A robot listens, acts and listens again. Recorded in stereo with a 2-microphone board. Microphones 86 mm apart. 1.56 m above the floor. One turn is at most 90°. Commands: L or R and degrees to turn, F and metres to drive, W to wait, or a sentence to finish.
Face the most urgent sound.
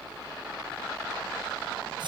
W
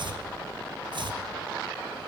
W
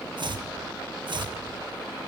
I can't make out anything urgent to turn to.